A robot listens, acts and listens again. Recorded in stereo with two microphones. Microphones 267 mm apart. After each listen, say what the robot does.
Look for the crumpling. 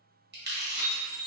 Turn 40° right.
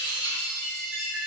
Keep listening.
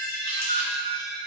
Keep listening.
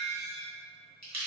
Turn 95° right.
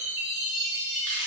Keep listening.
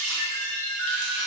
Keep listening.
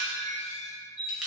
Facing the crumpling, under 1 m away.